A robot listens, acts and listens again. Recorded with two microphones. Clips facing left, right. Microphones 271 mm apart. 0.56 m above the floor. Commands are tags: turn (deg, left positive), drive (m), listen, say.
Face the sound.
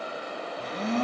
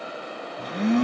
<turn deg="-65"/>
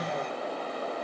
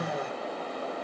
<say>Found it: a blender, straight ahead, 1 to 2 m away.</say>